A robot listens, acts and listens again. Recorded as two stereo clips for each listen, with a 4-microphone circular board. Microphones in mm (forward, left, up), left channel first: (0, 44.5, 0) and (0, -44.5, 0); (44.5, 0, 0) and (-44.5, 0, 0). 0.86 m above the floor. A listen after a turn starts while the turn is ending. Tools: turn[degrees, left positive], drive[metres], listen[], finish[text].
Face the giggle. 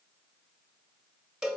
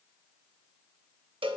Action: listen[]
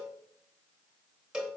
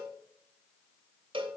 Action: listen[]
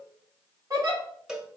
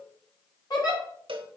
Thought: The giggle: 45° right.
Action: turn[-45]
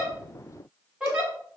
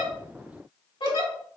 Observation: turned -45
Thought: The giggle is now 10° right.
Action: turn[-10]
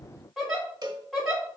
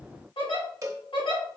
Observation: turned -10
Action: finish[Facing the giggle.]